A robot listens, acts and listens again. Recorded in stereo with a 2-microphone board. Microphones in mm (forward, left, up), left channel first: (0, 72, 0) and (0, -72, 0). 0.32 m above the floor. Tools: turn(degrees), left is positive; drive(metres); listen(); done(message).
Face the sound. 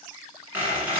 turn(degrees=-30)
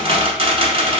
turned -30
turn(degrees=-140)
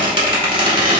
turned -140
turn(degrees=-40)
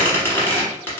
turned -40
turn(degrees=15)
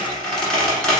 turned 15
done("Found it: a squeak, straight ahead.")